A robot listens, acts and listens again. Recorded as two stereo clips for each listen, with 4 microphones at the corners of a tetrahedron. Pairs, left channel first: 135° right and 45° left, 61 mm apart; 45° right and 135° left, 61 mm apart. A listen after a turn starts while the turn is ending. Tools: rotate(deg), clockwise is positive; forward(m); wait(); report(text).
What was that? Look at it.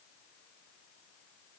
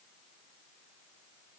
wait()
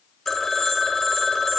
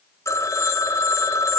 rotate(50)
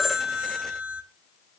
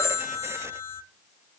rotate(15)
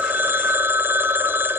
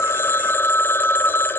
report("Facing the phone ringing.")